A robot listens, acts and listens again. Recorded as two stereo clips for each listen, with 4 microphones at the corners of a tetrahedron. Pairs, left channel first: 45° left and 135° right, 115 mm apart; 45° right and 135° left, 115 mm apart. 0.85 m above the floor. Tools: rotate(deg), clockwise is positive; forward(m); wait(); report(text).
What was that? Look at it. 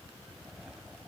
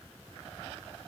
wait()
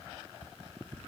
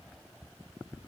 wait()
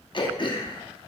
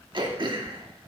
rotate(-90)
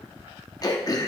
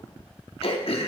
rotate(10)
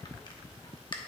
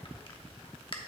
report("Found it: throat clearing, straight ahead.")